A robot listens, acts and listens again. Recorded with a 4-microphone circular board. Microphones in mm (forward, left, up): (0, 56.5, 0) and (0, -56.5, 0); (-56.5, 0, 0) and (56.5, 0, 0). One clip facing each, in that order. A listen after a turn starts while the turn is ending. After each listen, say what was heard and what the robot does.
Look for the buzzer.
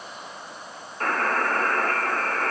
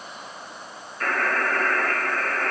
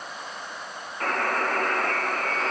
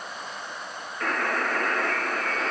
The buzzer: 140° left. Turn 140° left.
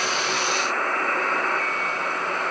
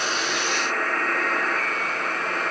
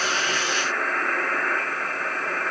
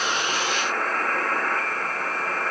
The buzzer is now 35° left. Turn 35° left.
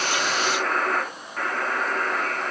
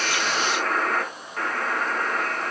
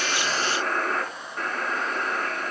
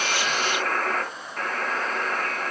Found it: a buzzer, straight ahead, 2 to 4 m away.